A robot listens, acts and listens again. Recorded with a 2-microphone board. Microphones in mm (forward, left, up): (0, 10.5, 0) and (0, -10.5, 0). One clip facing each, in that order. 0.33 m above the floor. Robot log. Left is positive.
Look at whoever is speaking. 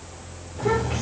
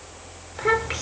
note: The child speaking: about 45° right or 135° right.
cmd yaw -45
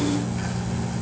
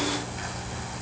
cmd idle
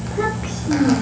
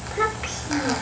end: Found it: a child speaking, straight ahead, 2 to 4 m away.